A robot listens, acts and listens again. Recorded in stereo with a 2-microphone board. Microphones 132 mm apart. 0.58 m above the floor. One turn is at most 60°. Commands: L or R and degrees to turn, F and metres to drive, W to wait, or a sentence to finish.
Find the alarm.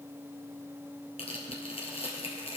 W
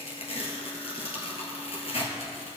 W
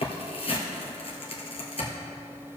I can't make out an alarm, only tearing paper.